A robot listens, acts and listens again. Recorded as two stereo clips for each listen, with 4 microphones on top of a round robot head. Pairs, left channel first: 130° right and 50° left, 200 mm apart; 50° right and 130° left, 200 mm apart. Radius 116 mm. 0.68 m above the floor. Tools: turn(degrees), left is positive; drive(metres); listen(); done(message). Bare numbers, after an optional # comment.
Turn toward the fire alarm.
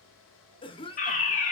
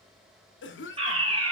# The fire alarm: 175° right.
turn(-175)
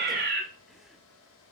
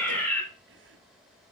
# The fire alarm is now 30° left.
turn(30)
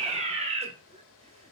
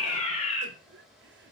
done("Facing the fire alarm, 2 to 4 m away.")